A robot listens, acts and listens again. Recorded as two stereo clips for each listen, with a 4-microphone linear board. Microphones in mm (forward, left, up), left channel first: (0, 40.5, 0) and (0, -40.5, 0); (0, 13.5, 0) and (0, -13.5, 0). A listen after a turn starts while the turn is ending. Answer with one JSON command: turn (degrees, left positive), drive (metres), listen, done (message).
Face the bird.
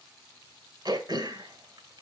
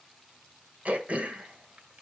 {"listen": true}
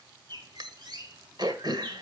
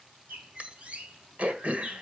{"turn": -60}
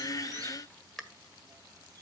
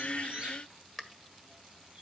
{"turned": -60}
{"turn": -55}
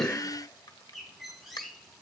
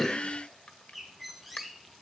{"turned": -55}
{"done": "Found it: a bird, straight ahead."}